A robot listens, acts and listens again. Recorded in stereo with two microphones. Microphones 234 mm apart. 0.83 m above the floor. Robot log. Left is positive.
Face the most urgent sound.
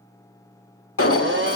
note: The alarm: about 65° left or 115° left.
cmd yaw +65
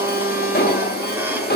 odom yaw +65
note: So it is at 45° left.
cmd yaw +45
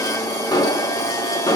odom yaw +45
note: The alarm is now 15° left.
cmd yaw +15
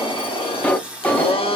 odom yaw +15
end: Found it: an alarm, straight ahead.